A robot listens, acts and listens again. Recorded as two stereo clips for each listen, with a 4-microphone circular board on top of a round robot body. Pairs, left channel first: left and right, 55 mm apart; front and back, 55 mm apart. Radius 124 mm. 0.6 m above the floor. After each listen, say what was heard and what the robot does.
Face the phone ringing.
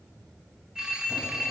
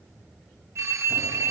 The phone ringing: 165° right. Turn 165° right.
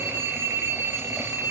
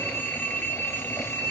The phone ringing is now 55° right. Turn 55° right.
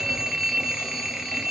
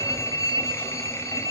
Found it: a phone ringing, straight ahead, 1 to 2 m away.